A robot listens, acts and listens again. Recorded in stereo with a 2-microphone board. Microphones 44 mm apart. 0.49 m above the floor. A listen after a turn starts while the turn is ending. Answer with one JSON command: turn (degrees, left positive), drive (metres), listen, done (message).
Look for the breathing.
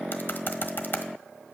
{"listen": true}
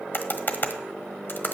{"listen": true}
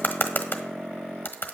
{"done": "I can't make out breathing, only typing on a keyboard."}